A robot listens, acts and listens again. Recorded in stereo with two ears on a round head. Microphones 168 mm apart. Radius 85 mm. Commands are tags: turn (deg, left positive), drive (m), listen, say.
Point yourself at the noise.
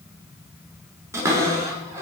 <turn deg="-15"/>
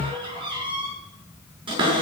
<turn deg="-150"/>
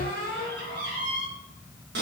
<turn deg="-55"/>
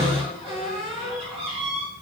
<turn deg="-30"/>
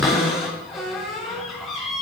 <say>Found it: a cupboard door, straight ahead, over 4 m away.</say>